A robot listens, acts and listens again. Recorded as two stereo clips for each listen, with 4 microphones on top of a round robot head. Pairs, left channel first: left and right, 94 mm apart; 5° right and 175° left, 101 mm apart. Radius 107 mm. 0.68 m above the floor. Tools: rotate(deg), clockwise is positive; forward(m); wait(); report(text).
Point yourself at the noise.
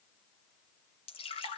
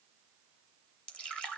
rotate(-75)
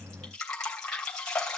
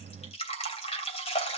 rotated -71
report("Facing the dripping, 2 to 4 m away.")